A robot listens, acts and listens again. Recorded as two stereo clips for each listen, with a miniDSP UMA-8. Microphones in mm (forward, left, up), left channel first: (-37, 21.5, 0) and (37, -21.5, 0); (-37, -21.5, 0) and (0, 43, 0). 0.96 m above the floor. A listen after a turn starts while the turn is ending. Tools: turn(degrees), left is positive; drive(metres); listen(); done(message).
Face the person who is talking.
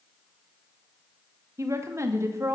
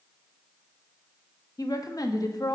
turn(degrees=-85)
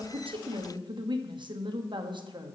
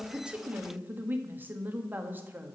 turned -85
done("Facing the woman speaking.")